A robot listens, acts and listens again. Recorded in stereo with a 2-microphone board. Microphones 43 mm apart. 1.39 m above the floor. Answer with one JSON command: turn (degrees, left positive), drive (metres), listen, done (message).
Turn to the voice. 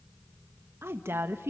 {"turn": -90}
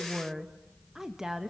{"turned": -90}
{"turn": -10}
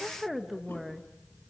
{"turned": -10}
{"done": "Facing the woman speaking."}